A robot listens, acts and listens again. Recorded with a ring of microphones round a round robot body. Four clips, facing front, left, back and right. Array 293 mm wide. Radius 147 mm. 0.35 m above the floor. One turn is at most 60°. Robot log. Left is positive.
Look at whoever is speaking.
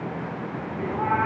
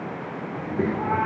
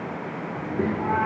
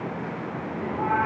note: The child speaking: 130° left.
cmd yaw +60
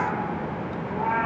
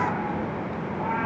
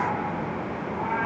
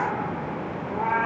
note: Nothing new. It was at 70° left.
cmd yaw +60
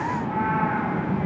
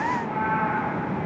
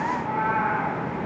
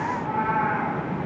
note: The child speaking is now 15° left.
cmd yaw +15
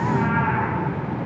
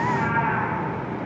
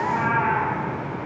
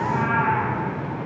end: Found it: a child speaking, straight ahead.